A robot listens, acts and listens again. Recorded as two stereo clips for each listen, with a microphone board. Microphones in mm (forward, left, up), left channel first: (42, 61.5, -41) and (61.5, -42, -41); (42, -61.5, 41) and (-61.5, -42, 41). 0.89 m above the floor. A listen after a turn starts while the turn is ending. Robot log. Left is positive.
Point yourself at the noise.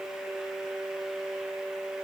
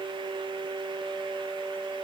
cmd idle
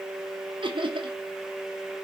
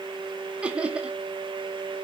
note: The laughter: 110° right.
cmd yaw -110
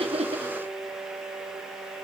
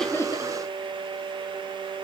note: The laughter is now 40° right.
cmd yaw -40
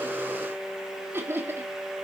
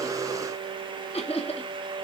note: The laughter is now 10° right.
cmd yaw -10
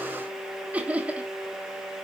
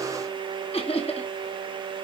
end: Found it: laughter, straight ahead.